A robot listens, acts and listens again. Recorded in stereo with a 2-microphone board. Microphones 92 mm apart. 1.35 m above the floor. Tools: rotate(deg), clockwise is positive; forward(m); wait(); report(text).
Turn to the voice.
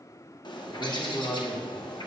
rotate(-45)
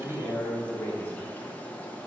rotate(-25)
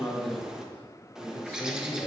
rotate(-30)
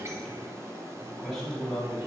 report("Found it: a man speaking, straight ahead, 2 to 4 m away.")